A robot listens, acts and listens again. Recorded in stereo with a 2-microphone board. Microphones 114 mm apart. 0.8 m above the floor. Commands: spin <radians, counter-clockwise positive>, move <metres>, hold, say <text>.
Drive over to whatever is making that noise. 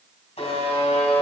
spin 1.22
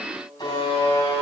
spin 0.70
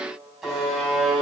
move 1.0
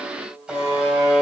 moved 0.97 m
move 1.0
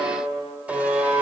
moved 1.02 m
spin -0.17
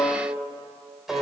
move 1.0
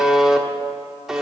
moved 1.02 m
move 1.0
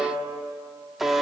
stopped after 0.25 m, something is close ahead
say I am next to the buzzer.